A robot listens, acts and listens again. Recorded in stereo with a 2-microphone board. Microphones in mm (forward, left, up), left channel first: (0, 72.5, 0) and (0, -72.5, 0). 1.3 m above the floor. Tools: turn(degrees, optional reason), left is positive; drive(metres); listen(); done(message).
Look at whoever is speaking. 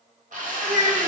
turn(degrees=-55, reason="The child speaking: about 55° right or 125° right.")
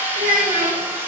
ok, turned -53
turn(degrees=-70, reason="So it is at 70° right.")
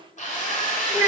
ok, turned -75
done("Found it: a child speaking, straight ahead.")